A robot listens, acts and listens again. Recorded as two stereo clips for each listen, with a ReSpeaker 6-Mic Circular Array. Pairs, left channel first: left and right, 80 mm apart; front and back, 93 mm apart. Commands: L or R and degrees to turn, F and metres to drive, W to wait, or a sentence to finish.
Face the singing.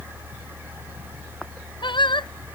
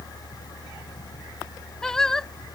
L85
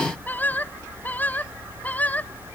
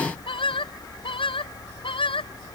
L20
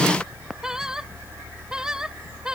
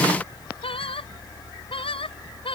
R10
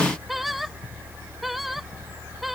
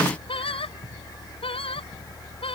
W
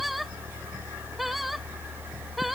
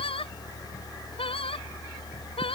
Found it: singing, straight ahead.